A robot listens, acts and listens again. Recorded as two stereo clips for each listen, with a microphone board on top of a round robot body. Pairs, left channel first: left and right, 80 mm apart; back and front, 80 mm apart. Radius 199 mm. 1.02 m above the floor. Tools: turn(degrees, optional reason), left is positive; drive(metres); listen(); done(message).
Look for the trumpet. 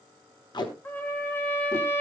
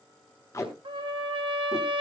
turn(degrees=20, reason="The trumpet: 20° left.")
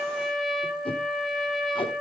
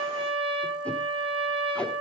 done("Found it: a trumpet, straight ahead, under 1 m away.")